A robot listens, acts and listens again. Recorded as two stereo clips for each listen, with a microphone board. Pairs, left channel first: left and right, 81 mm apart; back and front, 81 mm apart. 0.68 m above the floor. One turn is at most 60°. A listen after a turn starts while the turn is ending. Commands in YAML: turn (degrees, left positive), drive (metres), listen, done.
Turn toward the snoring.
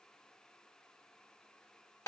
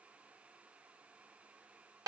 listen: true
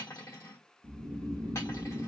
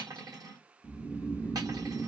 turn: -60
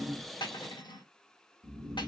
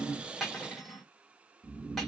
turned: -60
turn: -60
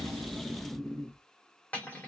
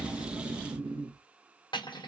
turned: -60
done: "Found it: snoring, straight ahead, under 1 m away."